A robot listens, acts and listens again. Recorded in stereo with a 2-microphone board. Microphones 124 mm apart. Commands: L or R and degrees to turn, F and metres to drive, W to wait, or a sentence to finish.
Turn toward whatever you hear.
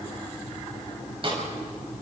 R45
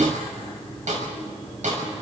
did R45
R85
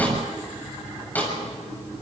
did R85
L15
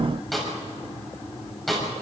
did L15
Facing the snare drum, over 4 m away.